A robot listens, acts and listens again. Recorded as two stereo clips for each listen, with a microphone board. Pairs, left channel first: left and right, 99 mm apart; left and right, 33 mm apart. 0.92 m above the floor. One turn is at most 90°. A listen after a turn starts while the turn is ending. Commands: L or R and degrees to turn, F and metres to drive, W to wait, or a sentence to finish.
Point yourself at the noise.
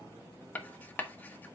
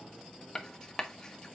L15
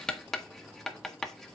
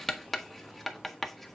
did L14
Facing the writing, 1 to 2 m away.